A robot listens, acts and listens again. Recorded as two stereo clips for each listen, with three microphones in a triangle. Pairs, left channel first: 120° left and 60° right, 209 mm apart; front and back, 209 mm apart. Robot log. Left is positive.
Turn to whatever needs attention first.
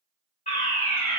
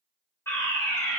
note: The fire alarm: 75° left.
cmd yaw +75
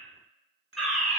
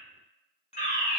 note: The fire alarm is now 30° left.
cmd yaw +30
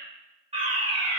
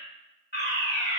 note: The fire alarm is now 10° right.
cmd yaw -10
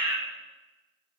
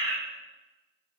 end: Facing the fire alarm.